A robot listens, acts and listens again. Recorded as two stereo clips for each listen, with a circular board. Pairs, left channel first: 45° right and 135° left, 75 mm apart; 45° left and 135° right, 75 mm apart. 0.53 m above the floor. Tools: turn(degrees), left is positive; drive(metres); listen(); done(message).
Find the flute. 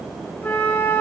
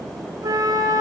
turn(degrees=-105)
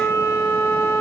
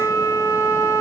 done("Facing the flute, 1 to 2 m away.")